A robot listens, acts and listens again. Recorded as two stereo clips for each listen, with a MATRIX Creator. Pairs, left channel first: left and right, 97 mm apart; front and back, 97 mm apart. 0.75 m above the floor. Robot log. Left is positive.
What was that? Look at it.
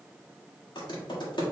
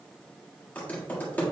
note: The typing on a keyboard: 70° left.
cmd yaw +70
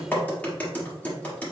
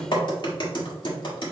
note: The typing on a keyboard is now 20° left.
cmd yaw +20
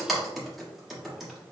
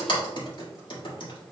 end: Facing the typing on a keyboard.